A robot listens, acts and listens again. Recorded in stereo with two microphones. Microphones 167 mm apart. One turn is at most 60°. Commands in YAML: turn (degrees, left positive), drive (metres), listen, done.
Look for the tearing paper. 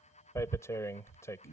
turn: 20
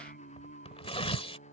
turn: 60
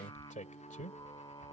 turn: 55
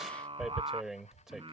done: "Facing the tearing paper."